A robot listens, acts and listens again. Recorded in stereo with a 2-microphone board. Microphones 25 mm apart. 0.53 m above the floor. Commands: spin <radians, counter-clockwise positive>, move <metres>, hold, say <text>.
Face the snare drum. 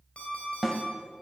spin -0.52
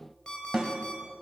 spin -2.53
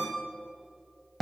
say Found it: a snare drum, straight ahead.